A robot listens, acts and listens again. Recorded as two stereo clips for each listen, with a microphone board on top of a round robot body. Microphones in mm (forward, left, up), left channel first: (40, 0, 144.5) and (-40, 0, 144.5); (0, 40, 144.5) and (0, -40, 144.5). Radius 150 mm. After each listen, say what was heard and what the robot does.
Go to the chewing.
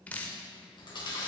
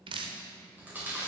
The chewing: 20° right. Turn 20° right.
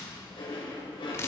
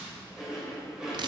The chewing is now 10° right. Turn 10° right.
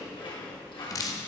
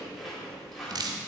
Drive 1.0 m forward.
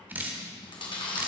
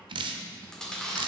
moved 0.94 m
The chewing is now 10° left. Turn 10° left.
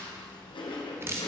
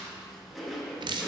Drive 1.0 m forward.
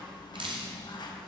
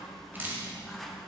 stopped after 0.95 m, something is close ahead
Arrived at the chewing, straight ahead.